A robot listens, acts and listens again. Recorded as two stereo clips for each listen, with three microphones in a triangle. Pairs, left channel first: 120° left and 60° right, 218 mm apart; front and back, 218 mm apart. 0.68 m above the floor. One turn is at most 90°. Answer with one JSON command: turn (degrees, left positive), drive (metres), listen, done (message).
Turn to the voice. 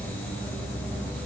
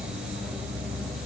{"listen": true}
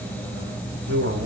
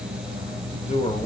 {"turn": -55}
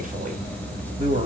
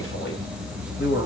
{"done": "Found it: a man speaking, straight ahead."}